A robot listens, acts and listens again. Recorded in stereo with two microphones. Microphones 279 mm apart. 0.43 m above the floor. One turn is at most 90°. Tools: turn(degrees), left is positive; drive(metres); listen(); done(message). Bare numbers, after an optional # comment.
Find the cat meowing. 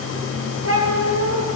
# The cat meowing: about 50° right or 130° right.
turn(-50)
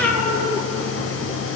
done("Found it: a cat meowing, straight ahead, 2 to 4 m away.")